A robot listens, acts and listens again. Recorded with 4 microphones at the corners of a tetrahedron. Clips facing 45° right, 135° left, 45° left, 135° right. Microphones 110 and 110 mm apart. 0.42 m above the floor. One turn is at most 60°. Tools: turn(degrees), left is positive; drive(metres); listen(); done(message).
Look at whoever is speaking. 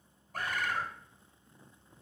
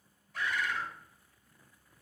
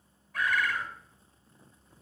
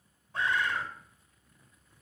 listen()
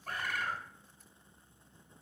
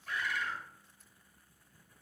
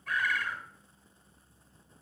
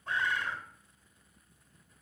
listen()
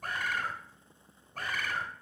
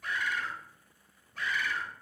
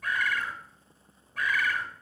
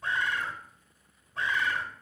done("I can't make out anyone speaking, only a bird.")